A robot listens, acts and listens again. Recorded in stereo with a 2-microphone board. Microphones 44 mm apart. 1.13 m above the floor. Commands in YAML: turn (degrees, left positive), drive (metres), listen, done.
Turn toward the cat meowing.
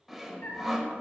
turn: 75
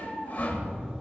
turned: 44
turn: 55
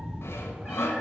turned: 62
turn: -10
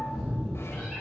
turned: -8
done: "Facing the cat meowing."